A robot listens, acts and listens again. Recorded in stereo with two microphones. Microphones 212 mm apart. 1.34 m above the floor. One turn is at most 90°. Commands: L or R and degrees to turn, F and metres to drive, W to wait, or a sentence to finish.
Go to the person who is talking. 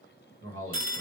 R90
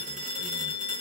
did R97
W
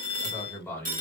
L10
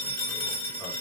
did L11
W
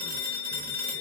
W
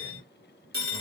Facing where the man speaking came from. I can't hear it now. I did not reach it.